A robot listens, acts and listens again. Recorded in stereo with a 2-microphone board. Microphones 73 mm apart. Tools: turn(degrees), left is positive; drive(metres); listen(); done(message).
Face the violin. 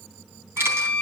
turn(degrees=20)
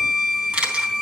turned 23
done("Facing the violin, 1 to 2 m away.")